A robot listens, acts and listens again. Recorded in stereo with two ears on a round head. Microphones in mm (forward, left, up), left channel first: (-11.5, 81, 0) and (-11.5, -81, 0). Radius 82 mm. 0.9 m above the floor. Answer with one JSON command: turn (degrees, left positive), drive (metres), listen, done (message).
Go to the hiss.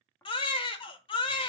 {"listen": true}
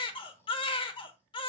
{"listen": true}
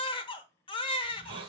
{"turn": -30}
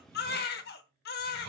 {"turn": -115}
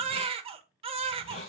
{"turn": 35}
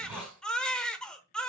{"drive": 1.0}
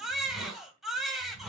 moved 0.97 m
{"drive": 1.0}
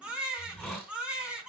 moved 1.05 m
{"drive": 1.0}
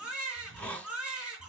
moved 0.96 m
{"drive": 1.0}
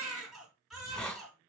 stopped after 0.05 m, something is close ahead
{"done": "Arrived at the hiss, straight ahead."}